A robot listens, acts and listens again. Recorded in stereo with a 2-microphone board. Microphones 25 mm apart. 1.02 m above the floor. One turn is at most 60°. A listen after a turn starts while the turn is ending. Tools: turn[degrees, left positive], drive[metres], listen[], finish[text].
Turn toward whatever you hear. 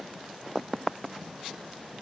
Action: listen[]
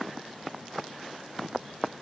Action: listen[]
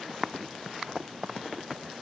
Action: finish[I can't make out anything.]